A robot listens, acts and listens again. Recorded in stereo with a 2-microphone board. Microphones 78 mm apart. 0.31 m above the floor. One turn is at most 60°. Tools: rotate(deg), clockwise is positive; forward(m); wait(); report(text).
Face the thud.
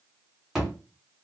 rotate(30)
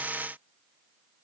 wait()
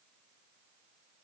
report("I heard a thud, but can't make it out now. It was about 25° left or 145° right.")